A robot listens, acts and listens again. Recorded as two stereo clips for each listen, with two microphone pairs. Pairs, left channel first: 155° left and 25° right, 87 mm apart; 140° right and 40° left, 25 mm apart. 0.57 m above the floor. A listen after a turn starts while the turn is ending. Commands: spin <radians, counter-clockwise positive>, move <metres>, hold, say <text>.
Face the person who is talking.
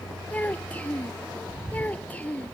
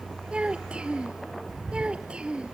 spin 1.40
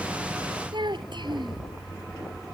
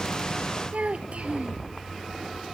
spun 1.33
say Facing the child speaking.